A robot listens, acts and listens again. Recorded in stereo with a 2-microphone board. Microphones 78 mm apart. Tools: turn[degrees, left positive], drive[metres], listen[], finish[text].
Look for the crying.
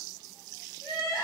Thought: The crying: about 45° left or 135° left.
Action: turn[45]
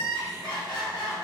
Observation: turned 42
Thought: So it is at 90° left.
Action: turn[90]
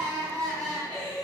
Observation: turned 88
Action: finish[Found it: crying, straight ahead.]